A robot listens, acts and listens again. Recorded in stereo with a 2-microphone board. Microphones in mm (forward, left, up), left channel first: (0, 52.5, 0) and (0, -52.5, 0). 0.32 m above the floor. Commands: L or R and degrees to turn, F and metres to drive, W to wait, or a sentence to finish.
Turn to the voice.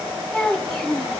L30
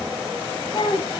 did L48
L125
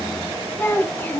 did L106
L20
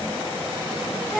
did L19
Facing the child speaking.